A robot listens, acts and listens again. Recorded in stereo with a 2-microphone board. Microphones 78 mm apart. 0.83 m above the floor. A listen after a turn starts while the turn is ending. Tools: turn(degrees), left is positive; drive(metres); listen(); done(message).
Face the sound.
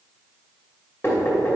turn(degrees=30)
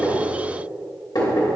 turn(degrees=120)
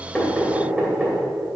turn(degrees=-15)
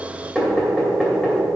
done("Facing the knocking, 2 to 4 m away.")